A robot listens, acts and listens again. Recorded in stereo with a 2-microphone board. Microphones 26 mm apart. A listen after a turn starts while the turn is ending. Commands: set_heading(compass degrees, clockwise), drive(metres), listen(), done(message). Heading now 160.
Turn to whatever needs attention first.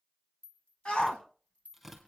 set_heading(120)
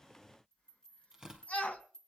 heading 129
set_heading(24)
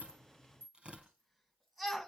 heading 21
done("Facing the shout.")